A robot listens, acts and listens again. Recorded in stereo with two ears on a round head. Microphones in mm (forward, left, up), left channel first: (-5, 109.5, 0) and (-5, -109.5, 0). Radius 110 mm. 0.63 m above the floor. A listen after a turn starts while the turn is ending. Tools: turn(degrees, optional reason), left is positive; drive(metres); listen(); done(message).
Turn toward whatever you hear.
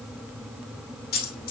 turn(degrees=40, reason="The dropped coin: about 40° left or 140° left.")
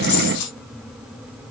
turn(degrees=105, reason="So it is at 105° left.")
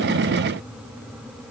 done("Facing where the dropped coin came from. I can't hear it now.")